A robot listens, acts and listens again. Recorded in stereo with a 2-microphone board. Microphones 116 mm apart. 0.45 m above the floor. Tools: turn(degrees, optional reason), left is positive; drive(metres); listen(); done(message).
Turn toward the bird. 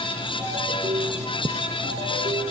listen()
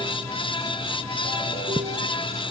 listen()
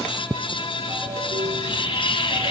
turn(degrees=45, reason="The bird: about 45° left or 135° left.")
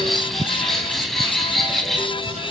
done("Facing the bird.")